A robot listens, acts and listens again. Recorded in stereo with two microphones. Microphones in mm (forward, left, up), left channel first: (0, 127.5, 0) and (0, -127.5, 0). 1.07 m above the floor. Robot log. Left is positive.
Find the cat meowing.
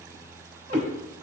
note: The cat meowing: about 40° right or 140° right.
cmd yaw -40
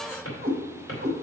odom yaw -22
note: The cat meowing: about 45° right or 135° right.
cmd yaw -45
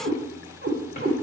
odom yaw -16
note: The cat meowing: about 50° right or 130° right.
cmd yaw -50
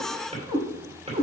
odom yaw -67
note: So it is at 25° right.
cmd yaw -25
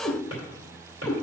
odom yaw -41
note: The cat meowing is now 10° left.
cmd yaw +10
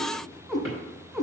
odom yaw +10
end: Facing the cat meowing, 2 to 4 m away.